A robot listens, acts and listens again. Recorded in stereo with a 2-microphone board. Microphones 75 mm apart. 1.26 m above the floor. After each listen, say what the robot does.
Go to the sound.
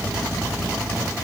Keep listening.
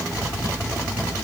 Keep listening.
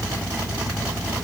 I can't make out anything.